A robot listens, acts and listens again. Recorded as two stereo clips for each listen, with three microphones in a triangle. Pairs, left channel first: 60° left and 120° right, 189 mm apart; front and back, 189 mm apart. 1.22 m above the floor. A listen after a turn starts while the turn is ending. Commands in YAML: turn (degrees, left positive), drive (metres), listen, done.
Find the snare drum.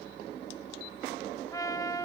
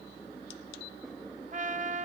listen: true
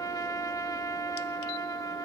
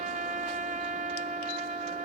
listen: true
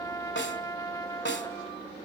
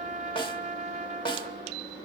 turn: 65
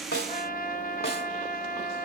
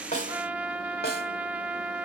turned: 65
listen: true
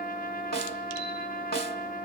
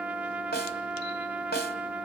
turn: 30
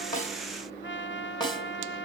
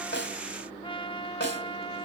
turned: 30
done: "Facing the snare drum."